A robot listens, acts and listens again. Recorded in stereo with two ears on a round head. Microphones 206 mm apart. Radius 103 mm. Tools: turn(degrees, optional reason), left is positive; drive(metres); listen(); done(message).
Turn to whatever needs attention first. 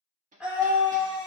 turn(degrees=-30)
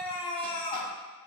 turn(degrees=25, reason="So it is at 25° left.")
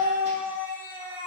turn(degrees=-10, reason="The scream is now 10° right.")
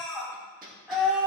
done("Found it: a scream, straight ahead.")